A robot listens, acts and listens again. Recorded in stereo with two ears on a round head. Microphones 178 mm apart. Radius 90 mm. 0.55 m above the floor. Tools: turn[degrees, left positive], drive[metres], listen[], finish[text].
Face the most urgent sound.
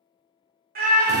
Thought: The scream: about 45° right or 135° right.
Action: turn[-45]
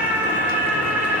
Thought: So it is at 10° right.
Action: turn[-10]
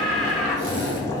Action: finish[Facing the scream.]